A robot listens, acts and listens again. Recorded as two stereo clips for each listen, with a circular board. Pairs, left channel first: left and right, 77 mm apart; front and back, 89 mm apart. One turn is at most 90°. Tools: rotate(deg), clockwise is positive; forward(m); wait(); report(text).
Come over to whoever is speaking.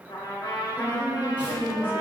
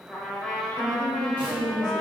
rotate(90)
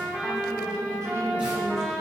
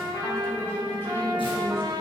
rotate(60)
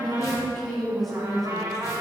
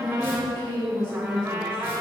forward(1.0)
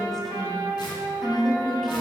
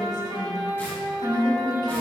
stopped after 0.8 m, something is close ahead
report("I am next to the woman speaking.")